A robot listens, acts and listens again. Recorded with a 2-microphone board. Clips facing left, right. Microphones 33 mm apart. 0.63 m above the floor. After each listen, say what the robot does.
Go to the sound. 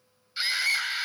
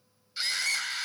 Turn 30° left.
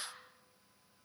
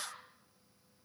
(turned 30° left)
Turn 15° right.
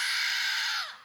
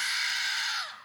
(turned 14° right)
Drive 1.0 m forward.
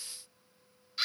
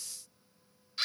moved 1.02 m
Drive 1.0 m forward.
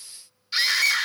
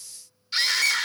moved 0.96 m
Drive 1.0 m forward.
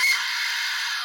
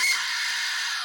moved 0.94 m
Drive 1.0 m forward.
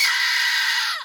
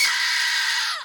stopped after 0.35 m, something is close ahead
I am next to the scream.